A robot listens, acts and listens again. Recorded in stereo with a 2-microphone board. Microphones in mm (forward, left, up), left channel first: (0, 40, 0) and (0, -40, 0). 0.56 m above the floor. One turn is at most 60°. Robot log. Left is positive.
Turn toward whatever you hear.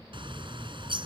cmd yaw -60
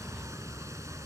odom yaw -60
note: So it is at 40° right.
cmd yaw -40
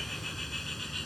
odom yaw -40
end: Facing the bird.